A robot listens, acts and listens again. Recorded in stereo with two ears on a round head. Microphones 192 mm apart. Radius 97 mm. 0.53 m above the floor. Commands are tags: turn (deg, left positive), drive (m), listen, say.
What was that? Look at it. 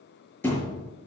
<turn deg="30"/>
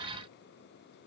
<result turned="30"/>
<listen/>
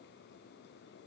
<say>I heard a thud, but can't make it out now. It was about 20° right or 140° left.</say>